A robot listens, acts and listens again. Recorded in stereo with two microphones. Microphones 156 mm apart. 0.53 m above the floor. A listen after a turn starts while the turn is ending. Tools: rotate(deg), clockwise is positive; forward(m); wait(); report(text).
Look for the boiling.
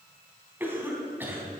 wait()
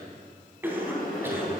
rotate(-65)
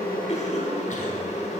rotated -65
rotate(-45)
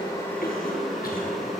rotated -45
report("Found it: boiling, straight ahead.")